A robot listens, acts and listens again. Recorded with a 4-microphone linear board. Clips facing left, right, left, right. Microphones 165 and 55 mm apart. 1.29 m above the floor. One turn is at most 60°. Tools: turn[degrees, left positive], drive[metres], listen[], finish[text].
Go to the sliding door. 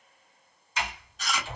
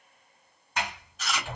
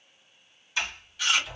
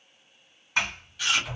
Thought: The sliding door: about 55° right or 125° right.
Action: turn[-55]
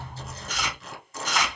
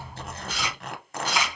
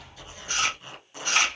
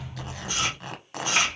Thought: So it is at 15° right.
Action: turn[-15]
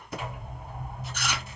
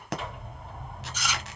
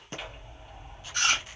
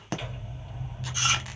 Action: drive[1.0]
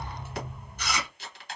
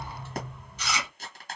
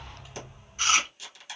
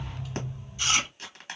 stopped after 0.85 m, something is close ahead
Thought: The sliding door is now 15° left.
Action: turn[15]
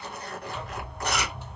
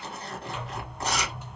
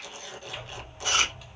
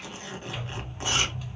Action: finish[Arrived at the sliding door, straight ahead.]